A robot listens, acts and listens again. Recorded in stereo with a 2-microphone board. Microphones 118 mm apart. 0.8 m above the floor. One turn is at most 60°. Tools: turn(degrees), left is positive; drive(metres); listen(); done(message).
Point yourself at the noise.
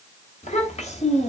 turn(degrees=60)
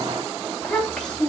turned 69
turn(degrees=10)
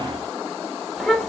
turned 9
done("Found it: a child speaking, straight ahead, 1 to 2 m away.")